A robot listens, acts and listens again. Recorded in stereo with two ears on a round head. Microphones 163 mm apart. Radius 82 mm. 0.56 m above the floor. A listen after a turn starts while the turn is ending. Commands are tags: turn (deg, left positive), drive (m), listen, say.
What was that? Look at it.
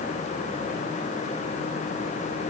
<listen/>
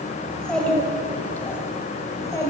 <turn deg="20"/>
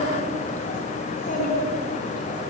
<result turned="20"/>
<turn deg="130"/>
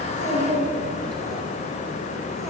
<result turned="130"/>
<say>Facing the child speaking, 2 to 4 m away.</say>